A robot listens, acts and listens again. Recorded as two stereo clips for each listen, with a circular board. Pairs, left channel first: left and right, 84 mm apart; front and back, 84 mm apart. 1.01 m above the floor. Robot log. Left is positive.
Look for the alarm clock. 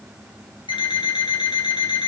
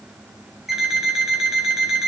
note: The alarm clock: 90° left.
cmd yaw +90
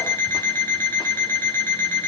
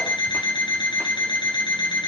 note: The alarm clock is now 25° left.
cmd yaw +25
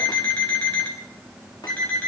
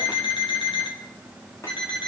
note: The alarm clock is now 15° left.
cmd yaw +15
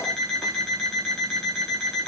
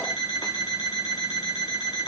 end: Facing the alarm clock, 2 to 4 m away.